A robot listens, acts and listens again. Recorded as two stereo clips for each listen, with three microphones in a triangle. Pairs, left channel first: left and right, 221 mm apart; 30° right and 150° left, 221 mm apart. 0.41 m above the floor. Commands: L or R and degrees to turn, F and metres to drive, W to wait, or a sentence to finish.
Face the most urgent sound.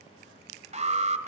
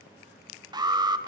R140
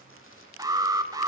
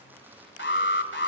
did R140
R20
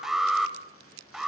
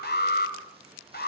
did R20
Facing the alarm, 2 to 4 m away.